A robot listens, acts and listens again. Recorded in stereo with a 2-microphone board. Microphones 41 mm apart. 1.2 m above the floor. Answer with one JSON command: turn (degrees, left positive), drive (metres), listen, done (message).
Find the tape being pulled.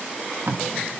{"turn": -90}
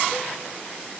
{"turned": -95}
{"listen": true}
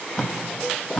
{"turn": 10}
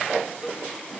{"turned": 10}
{"listen": true}
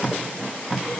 {"done": "Facing the tape being pulled."}